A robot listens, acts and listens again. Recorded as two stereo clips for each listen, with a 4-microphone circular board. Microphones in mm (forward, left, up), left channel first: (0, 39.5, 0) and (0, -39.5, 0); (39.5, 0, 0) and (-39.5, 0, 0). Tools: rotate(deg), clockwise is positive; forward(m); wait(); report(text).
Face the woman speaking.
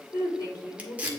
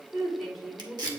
rotate(-90)
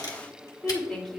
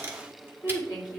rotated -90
report("Found it: a woman speaking, straight ahead, 2 to 4 m away.")